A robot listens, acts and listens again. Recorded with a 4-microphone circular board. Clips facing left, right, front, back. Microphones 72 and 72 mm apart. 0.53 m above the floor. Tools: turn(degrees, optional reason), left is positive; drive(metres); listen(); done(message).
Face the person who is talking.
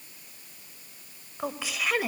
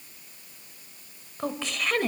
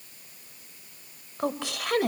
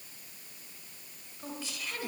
done("Facing the woman speaking.")